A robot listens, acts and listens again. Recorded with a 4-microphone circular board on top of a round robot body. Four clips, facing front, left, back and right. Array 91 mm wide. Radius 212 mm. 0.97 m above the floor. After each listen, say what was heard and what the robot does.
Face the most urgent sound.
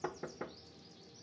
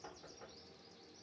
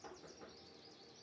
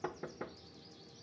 Keep listening.
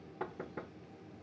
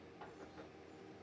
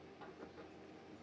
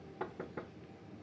Keep listening.
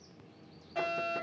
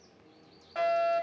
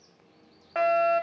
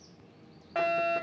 The fire alarm: 165° right. Turn 165° right.
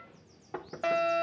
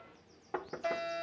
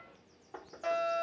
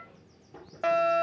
The fire alarm is now 60° right. Turn 60° right.
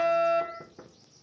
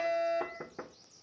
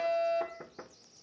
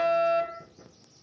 The fire alarm is now 20° right. Turn 20° right.
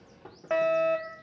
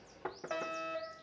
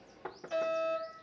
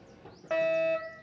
Found it: a fire alarm, straight ahead, 2 to 4 m away.